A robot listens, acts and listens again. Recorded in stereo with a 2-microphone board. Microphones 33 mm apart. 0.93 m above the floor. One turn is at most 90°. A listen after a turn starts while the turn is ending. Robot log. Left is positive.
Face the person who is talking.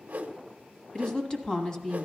note: The woman speaking: about 20° left or 160° left.
cmd yaw +20
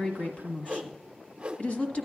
note: So it is at 140° left.
cmd yaw +90
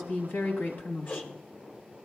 note: The woman speaking is now 80° left.
cmd yaw +80
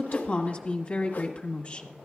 note: The woman speaking is now 40° left.
cmd yaw +40
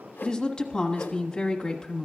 note: The woman speaking is now 20° left.
cmd yaw +20
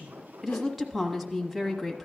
end: Found it: a woman speaking, straight ahead, 1 to 2 m away.